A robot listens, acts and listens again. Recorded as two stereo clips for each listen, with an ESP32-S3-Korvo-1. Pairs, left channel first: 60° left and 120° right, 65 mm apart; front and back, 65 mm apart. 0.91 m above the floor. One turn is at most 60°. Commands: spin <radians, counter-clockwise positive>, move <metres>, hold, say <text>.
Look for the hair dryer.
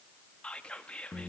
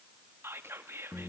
hold
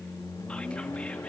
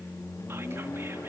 hold
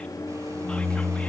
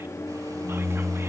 say I can't make out a hair dryer, only whispering and a microwave.